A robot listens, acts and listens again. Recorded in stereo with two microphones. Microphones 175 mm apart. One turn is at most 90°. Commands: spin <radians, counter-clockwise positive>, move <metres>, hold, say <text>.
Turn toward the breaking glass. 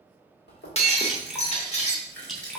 spin 0.70
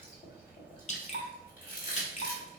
hold
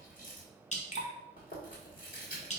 say I heard breaking glass, but can't make it out now. It was about straight ahead or 100° left.